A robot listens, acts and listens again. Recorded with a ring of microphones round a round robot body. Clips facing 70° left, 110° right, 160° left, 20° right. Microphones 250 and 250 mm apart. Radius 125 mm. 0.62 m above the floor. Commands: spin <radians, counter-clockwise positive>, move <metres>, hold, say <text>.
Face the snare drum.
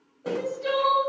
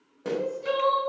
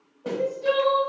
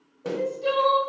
spin -1.22
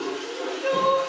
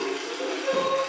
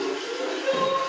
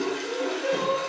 hold
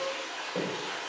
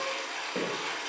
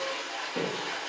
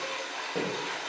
spin -0.35
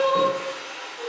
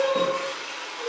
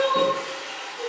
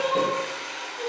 hold
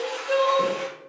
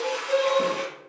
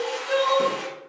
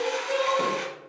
hold
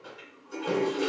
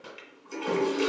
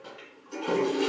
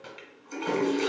say Facing where the snare drum came from. I can't hear it now.